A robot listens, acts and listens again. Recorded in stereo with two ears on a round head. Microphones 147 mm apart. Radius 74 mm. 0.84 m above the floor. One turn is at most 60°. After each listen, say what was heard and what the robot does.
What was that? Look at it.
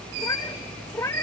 The cat meowing: about 15° left or 165° left. Turn 15° left.
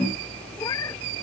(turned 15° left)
Keep listening.
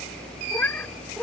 Turn 30° left.
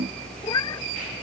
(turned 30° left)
So it is at 155° left. Turn 60° left.
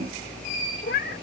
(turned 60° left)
The cat meowing is now 120° left. Turn 60° left.
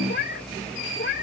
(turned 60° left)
The cat meowing is now 55° left. Turn 55° left.
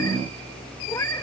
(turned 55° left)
Keep listening.
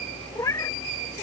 The cat meowing is now 20° left. Turn 20° left.
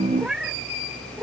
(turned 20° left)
Facing the cat meowing.